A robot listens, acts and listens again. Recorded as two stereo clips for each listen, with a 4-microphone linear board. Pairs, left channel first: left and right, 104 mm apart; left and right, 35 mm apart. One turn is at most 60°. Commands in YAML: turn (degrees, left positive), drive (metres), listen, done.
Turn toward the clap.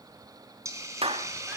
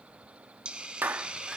turn: -60
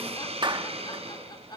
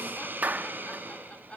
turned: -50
turn: -50
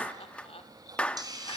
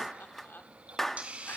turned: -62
turn: 10
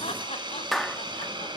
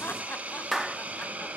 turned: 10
done: "Found it: a clap, straight ahead, 1 to 2 m away."